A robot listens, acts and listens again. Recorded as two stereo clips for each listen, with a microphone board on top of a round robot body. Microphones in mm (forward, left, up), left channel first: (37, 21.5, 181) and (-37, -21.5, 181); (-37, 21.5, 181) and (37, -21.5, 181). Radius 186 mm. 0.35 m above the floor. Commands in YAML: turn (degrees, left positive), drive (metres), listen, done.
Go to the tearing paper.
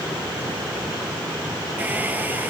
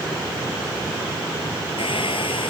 listen: true
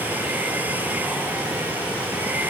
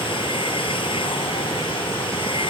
listen: true
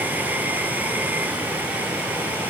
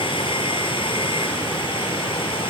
done: "I can't make out tearing paper, only a hair dryer."